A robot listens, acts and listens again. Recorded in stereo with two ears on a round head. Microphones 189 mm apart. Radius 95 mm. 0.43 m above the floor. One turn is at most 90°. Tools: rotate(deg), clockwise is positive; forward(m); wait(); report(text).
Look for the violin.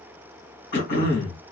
wait()
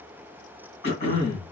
wait()
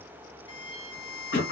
rotate(-25)
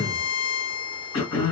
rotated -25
rotate(-90)
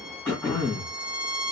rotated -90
rotate(-45)
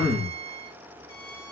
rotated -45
rotate(-20)
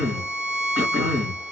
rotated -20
report("Found it: a violin, straight ahead, 1 to 2 m away.")